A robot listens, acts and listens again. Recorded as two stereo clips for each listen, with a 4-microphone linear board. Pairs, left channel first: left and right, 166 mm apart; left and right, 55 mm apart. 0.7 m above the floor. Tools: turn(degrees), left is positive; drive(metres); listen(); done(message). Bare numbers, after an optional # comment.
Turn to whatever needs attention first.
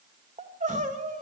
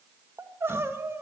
# The crying: about 45° right or 135° right.
turn(-45)
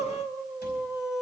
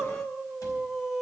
done("Found it: crying, straight ahead.")